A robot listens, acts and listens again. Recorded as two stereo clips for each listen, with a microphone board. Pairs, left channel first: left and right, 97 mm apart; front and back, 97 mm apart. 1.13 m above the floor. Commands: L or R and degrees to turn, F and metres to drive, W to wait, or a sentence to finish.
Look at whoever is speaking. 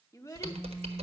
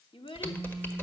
L30
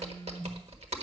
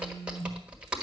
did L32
W
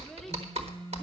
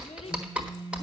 W
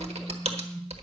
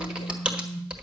Facing where the child speaking came from. I can't hear it now.